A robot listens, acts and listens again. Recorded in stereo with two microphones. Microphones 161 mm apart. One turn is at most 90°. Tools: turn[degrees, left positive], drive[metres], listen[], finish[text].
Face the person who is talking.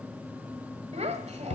Thought: The child speaking: about 45° right or 135° right.
Action: turn[-45]
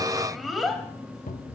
Action: finish[Facing the child speaking, 1 to 2 m away.]